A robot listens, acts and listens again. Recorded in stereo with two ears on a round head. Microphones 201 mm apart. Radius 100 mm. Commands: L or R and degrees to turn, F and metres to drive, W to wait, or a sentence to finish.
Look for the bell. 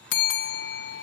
L50
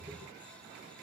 W
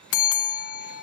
L70
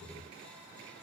Found it: a bell, straight ahead.